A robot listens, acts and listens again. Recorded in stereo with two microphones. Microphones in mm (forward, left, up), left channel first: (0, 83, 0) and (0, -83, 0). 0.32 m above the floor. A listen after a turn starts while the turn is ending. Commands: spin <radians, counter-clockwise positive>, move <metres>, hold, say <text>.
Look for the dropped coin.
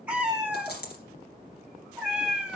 spin 1.57
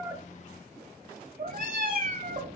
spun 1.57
say Facing where the dropped coin came from. I can't hear it now.